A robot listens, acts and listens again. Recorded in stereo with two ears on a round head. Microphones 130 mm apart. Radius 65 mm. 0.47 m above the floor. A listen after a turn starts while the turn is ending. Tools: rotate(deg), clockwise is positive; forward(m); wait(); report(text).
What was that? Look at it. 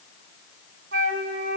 rotate(90)
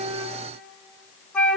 rotate(-10)
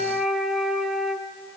report("Found it: a flute, straight ahead.")